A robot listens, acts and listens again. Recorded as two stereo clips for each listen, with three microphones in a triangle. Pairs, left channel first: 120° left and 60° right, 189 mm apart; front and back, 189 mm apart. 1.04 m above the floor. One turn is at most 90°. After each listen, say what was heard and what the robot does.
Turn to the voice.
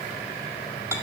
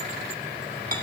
Keep listening.
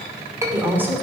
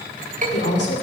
The woman speaking: 20° left. Turn 20° left.
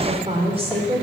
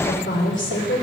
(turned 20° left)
Facing the woman speaking.